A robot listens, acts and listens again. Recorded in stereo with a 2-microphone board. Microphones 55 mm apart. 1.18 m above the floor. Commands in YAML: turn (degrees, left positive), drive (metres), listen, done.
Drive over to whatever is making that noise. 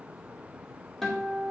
turn: 30
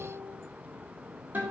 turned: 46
turn: -35
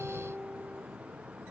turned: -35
drive: 1.0
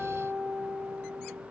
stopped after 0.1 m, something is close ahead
done: "Blocked. The guitar is further on, straight ahead."